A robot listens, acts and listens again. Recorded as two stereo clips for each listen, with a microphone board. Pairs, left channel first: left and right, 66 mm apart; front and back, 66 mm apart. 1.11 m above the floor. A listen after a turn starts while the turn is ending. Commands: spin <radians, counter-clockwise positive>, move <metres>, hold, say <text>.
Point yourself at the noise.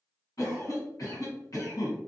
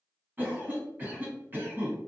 spin 2.18
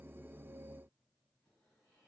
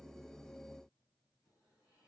hold
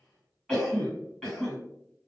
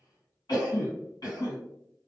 spin 0.17
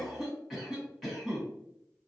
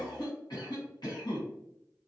say Found it: a cough, straight ahead.